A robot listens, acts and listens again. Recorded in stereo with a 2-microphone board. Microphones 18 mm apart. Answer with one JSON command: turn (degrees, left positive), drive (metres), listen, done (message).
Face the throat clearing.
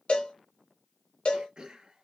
{"turn": -60}
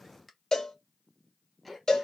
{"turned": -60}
{"done": "Facing the throat clearing, 1 to 2 m away."}